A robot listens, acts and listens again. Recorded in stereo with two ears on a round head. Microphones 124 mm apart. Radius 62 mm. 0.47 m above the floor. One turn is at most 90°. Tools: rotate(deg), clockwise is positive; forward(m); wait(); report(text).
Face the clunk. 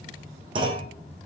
rotate(35)
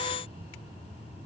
wait()
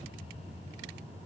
report("I heard a clunk, but can't make it out now. It was about straight ahead or 110° right.")